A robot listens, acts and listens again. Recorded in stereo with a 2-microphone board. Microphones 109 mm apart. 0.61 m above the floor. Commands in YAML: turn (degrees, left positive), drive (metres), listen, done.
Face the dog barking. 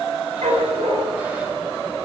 turn: -90
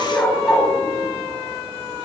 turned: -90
turn: 10
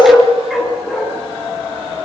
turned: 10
done: "Facing the dog barking, over 4 m away."